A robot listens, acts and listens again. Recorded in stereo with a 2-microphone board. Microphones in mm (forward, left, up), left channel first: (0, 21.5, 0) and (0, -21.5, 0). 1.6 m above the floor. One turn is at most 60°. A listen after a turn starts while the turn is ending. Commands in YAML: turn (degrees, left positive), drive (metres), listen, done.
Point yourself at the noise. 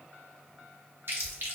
turn: -55
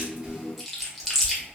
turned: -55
done: "Found it: chewing, straight ahead, under 1 m away."